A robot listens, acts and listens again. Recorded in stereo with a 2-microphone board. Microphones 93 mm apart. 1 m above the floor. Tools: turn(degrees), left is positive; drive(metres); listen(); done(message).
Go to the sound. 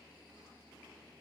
listen()
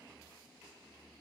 listen()
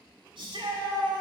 turn(degrees=-70)
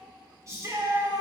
turn(degrees=-35)
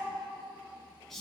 drive(metres=1.0)
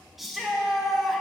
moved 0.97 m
drive(metres=1.0)
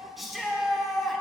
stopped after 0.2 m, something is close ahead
done("Arrived at the shout, straight ahead.")